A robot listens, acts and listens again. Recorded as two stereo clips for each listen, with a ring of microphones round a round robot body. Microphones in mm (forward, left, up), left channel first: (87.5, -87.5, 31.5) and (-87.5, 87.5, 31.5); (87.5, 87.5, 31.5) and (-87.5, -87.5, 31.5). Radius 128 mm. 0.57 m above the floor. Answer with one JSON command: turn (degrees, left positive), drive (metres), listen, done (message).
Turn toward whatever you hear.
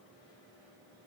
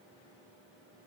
{"listen": true}
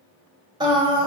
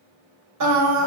{"turn": -155}
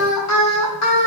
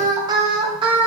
{"turn": -65}
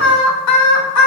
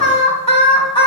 {"turn": -25}
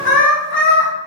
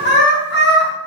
{"done": "Found it: singing, straight ahead."}